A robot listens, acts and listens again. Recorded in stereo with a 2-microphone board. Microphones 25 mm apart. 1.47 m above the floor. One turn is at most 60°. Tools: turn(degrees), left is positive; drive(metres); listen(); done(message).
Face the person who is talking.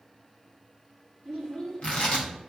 turn(degrees=30)
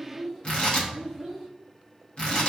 done("Found it: a child speaking, straight ahead.")